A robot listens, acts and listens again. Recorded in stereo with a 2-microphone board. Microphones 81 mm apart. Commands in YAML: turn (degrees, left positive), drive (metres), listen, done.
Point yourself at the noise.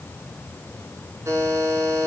turn: -40
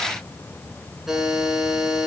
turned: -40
done: "Found it: a buzzer, straight ahead, over 4 m away."